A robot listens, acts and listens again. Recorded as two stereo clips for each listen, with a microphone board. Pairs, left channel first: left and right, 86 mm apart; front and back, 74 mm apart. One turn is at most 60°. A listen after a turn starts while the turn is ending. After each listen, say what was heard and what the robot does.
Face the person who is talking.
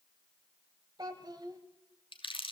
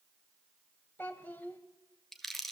The child speaking: 65° right. Turn 60° right.
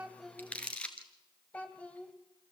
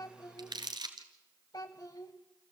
The child speaking is now 20° left. Turn 20° left.
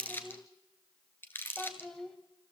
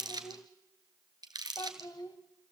Found it: a child speaking, straight ahead.